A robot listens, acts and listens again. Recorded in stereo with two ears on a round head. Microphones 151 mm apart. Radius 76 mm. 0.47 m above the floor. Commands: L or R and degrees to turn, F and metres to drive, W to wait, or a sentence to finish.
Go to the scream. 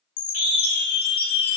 L50
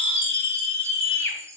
L80
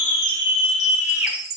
R15
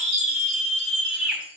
F1.0
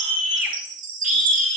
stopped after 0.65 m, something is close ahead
R15
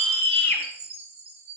Blocked. The scream is further on, straight ahead.